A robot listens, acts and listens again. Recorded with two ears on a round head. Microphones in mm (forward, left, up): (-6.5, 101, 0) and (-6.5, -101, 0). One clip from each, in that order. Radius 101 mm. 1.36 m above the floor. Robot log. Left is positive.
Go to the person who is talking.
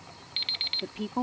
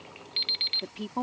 cmd yaw -30
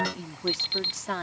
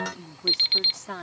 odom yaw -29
note: So it is at 15° left.
cmd yaw +15
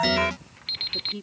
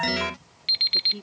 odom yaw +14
cmd fwd 1.0
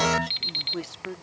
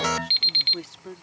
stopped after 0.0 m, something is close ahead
end: Blocked. The woman speaking is further on, straight ahead.